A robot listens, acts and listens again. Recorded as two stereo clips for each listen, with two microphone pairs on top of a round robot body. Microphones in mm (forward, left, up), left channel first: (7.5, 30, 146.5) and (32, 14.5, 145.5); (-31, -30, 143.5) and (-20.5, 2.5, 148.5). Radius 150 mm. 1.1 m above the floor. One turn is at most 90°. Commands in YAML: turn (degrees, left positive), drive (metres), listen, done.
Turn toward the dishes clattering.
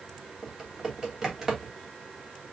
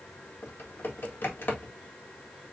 listen: true
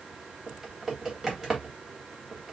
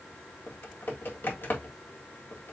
listen: true
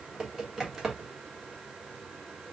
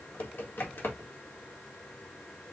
done: "I can't make out dishes clattering, only typing on a keyboard."